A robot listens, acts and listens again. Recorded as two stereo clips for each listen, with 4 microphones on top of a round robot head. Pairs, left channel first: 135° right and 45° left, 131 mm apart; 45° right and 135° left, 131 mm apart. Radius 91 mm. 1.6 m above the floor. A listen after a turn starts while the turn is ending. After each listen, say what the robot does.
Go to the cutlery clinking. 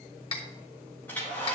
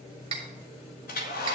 Turn 180° left.
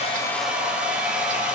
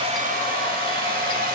Keep listening.
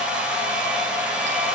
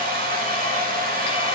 Keep listening.
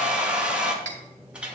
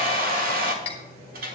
Drive 1.0 m forward.
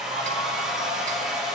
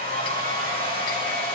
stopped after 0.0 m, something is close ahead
Keep listening.
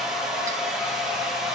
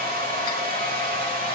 Keep listening.
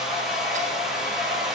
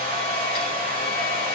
I heard cutlery clinking from this way, but can't make it out now. I did not reach it.